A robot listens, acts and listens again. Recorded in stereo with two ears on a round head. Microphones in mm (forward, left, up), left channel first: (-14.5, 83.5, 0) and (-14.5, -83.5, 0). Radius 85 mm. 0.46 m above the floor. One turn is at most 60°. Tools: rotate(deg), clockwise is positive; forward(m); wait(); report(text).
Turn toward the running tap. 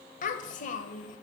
wait()
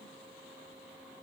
wait()
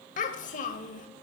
report("I can't make out a running tap to turn to.")